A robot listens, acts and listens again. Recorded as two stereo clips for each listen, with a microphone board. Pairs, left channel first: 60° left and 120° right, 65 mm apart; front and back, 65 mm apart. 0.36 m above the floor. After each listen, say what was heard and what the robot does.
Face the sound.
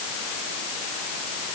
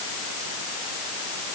Keep listening.
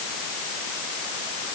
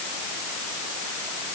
Keep listening.
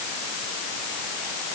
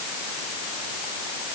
I can't make out anything.